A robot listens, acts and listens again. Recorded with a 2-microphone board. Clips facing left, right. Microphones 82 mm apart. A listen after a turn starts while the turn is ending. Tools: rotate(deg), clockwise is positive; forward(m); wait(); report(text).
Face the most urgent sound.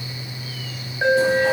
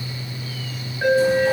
rotate(-25)
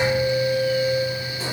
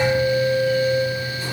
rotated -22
rotate(-130)
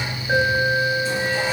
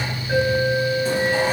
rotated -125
report("Found it: an alarm, straight ahead, 2 to 4 m away.")